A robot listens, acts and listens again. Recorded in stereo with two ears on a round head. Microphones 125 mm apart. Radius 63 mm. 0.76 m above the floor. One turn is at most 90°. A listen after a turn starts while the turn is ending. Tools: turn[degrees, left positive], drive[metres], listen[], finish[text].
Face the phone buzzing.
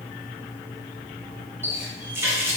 Action: listen[]
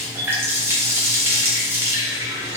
Action: listen[]
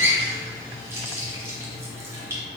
Action: finish[I can't make out a phone buzzing, only a running tap.]